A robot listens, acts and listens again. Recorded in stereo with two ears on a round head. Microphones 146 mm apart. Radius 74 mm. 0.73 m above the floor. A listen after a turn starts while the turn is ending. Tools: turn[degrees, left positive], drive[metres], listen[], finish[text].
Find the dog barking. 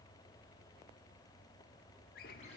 Action: listen[]
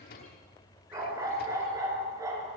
Thought: The dog barking: about 20° right or 160° right.
Action: turn[-20]
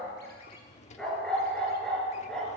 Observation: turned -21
Action: finish[Facing the dog barking, over 4 m away.]